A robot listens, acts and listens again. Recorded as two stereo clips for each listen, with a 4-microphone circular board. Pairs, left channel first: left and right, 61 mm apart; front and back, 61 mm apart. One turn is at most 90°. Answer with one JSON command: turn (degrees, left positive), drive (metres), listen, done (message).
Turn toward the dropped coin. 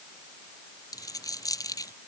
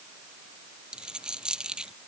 {"turn": 90}
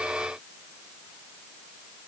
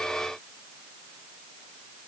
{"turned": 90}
{"turn": 15}
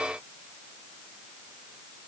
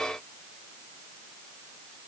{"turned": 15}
{"done": "Facing where the dropped coin came from. I can't hear it now."}